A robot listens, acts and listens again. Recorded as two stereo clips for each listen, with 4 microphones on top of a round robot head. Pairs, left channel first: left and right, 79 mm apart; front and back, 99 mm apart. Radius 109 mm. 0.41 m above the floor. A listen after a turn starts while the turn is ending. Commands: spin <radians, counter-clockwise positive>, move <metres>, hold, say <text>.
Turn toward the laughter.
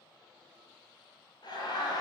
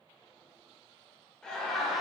spin 1.57
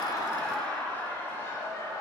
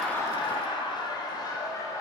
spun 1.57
spin 0.79
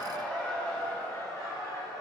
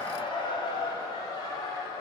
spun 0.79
spin 0.79
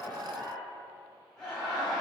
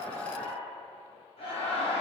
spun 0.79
say Facing the laughter, 2 to 4 m away.